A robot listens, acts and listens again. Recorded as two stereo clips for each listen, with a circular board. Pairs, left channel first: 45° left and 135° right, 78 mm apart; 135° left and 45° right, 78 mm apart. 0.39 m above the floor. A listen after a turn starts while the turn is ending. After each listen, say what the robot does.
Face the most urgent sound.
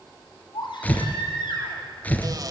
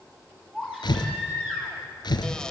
Turn 35° left.
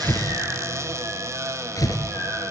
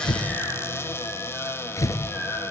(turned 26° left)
Turn 10° left.
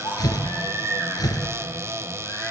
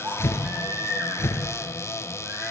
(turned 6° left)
Found it: a baby crying, straight ahead.